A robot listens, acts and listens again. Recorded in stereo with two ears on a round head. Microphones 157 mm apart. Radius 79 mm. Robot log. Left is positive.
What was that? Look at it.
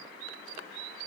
cmd idle
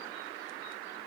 cmd idle
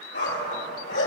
cmd yaw +90
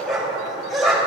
end: Found it: a dog barking, straight ahead, over 4 m away.